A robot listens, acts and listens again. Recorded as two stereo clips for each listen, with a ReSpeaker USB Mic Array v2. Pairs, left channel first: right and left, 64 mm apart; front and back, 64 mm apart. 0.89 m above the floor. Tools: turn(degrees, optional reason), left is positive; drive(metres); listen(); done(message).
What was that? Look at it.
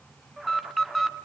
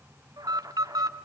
turn(degrees=-175, reason="The alarm: 175° right.")
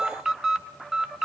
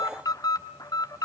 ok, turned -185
turn(degrees=10, reason="The alarm is now 10° left.")
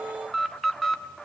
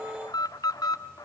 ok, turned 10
done("Found it: an alarm, straight ahead, 1 to 2 m away.")